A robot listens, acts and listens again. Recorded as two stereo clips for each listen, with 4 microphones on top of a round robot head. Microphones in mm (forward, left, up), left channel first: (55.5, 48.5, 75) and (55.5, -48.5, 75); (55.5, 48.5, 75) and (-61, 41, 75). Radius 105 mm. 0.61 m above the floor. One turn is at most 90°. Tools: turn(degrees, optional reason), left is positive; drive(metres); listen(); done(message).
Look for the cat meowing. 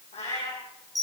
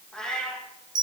turn(degrees=85, reason="The cat meowing: 85° left.")
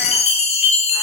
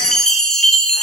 listen()
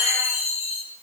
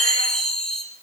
listen()
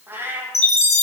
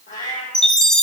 turn(degrees=-25, reason="The cat meowing is now 25° right.")
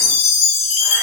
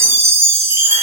listen()
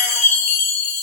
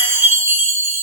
listen()
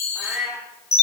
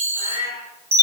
done("Found it: a cat meowing, straight ahead.")